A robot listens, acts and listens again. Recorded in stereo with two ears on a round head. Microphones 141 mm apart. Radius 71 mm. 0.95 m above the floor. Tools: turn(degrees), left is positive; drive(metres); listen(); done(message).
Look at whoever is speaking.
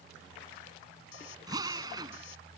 listen()
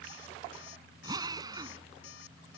listen()
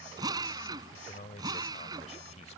turn(degrees=45)
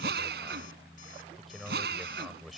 done("Facing the man speaking.")